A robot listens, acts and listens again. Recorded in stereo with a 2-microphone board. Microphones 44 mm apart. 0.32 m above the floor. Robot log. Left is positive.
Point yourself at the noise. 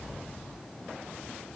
cmd idle
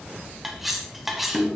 cmd yaw -30
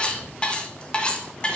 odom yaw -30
note: So it is at 25° left.
cmd yaw +25
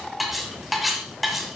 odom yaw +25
end: Facing the cutlery clinking.